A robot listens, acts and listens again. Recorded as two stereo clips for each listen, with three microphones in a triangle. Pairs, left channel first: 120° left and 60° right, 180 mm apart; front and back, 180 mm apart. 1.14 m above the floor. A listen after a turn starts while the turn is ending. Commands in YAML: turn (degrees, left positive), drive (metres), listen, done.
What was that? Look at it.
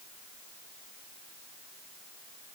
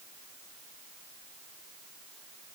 listen: true
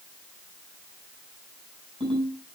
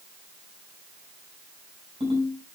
turn: -120
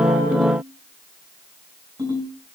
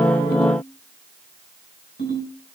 done: "Facing the ringtone, over 4 m away."